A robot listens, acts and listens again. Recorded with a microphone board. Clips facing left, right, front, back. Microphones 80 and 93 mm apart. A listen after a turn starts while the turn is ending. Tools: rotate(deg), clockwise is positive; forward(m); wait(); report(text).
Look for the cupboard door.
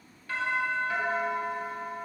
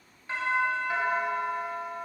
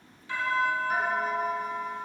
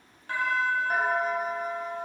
wait()
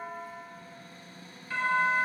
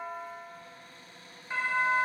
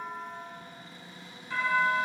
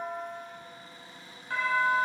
rotate(-130)
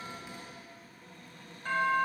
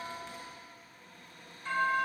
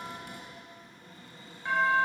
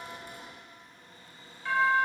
rotate(10)
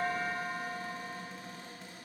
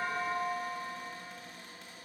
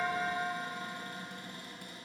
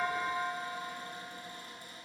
report("Facing the cupboard door, 2 to 4 m away.")